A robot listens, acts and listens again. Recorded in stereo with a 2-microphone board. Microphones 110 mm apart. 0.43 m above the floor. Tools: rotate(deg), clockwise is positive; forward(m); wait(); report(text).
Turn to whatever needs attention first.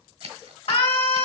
rotate(-65)
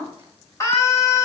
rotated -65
rotate(-30)
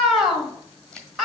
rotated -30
report("Found it: a scream, straight ahead.")